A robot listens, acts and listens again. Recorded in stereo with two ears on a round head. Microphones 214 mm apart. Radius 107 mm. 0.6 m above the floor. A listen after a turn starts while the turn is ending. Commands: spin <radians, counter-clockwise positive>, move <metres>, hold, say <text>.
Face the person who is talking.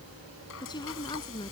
spin 0.35
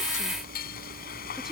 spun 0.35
hold
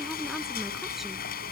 hold
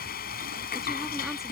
say I heard a woman speaking, but can't make it out now. It was about straight ahead or 140° left.